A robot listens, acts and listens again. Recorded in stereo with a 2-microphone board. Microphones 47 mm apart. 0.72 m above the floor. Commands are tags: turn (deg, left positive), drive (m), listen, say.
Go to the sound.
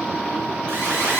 <turn deg="-50"/>
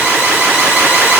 <turn deg="-75"/>
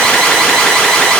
<turn deg="10"/>
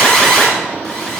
<drive m="1.0"/>
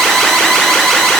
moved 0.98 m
<drive m="1.0"/>
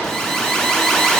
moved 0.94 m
<turn deg="10"/>
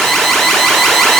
<drive m="1.0"/>
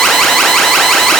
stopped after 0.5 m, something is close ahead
<say>Arrived at the alarm, straight ahead.</say>